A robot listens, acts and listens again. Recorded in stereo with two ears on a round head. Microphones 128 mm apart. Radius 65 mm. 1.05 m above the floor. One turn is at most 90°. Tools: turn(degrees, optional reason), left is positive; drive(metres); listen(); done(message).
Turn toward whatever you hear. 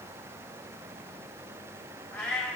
turn(degrees=30)
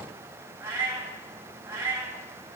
turn(degrees=-20, reason="So it is at 20° right.")
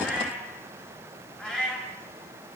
done("Facing the cat meowing, 2 to 4 m away.")